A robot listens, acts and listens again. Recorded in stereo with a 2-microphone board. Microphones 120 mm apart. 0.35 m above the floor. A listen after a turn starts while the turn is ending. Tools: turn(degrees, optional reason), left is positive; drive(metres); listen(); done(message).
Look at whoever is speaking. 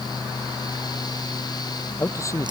turn(degrees=25, reason="The man speaking: about 25° left or 155° left.")
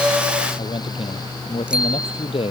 turn(degrees=130, reason="So it is at 130° left.")
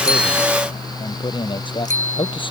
turn(degrees=40, reason="The man speaking is now 40° left.")
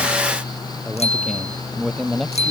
done("Facing the man speaking.")